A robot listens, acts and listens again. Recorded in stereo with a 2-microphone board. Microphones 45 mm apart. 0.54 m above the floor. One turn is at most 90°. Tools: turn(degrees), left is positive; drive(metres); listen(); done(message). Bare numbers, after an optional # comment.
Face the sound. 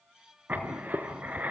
# The writing: about 35° right or 145° right.
turn(-35)
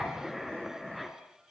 done("Found it: writing, straight ahead, 2 to 4 m away.")